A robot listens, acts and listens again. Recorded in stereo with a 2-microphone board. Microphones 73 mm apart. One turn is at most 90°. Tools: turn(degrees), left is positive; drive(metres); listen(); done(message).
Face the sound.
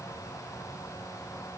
listen()
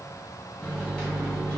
turn(degrees=30)
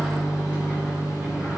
turn(degrees=-15)
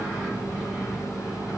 done("Facing the microwave, 1 to 2 m away.")